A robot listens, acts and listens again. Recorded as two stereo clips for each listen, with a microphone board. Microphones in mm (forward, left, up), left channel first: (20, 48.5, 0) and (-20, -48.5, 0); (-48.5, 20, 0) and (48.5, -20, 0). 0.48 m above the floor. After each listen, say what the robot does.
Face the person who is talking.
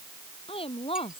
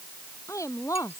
Turn 95° left.
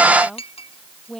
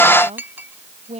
Turn 20° right.
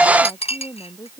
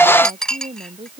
Facing the woman speaking.